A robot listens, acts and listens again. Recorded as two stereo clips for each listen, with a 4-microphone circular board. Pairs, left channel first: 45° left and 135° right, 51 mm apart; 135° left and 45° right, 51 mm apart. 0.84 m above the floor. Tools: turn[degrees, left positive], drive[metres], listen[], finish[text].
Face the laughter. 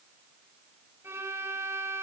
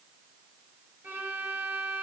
Action: listen[]
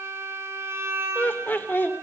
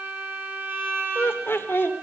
Thought: The laughter: 90° left.
Action: turn[90]
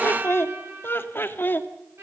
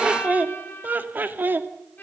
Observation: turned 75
Action: finish[Found it: laughter, straight ahead, 1 to 2 m away.]